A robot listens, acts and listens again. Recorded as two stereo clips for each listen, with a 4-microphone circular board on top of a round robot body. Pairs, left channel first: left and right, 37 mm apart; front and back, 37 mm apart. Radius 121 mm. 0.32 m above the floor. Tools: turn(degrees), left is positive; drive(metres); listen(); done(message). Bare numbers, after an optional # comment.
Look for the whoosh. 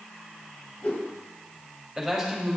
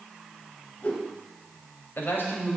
# The whoosh: 45° left.
turn(45)
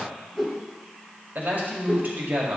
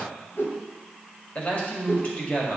done("Facing the whoosh, 1 to 2 m away.")